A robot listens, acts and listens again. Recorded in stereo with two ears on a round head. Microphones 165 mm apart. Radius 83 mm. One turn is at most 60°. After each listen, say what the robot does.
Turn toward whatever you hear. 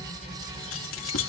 Turn 60° left.
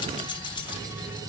Turn 25° left.
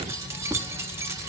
Turn 15° right.
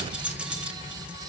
Found it: keys jangling, straight ahead, 1 to 2 m away.